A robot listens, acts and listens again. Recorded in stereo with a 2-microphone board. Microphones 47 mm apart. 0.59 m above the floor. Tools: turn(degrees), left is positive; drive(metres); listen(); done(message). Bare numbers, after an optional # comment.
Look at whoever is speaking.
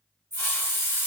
listen()
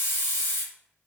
listen()
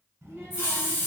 turn(-90)
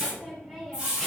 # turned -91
done("Facing the child speaking.")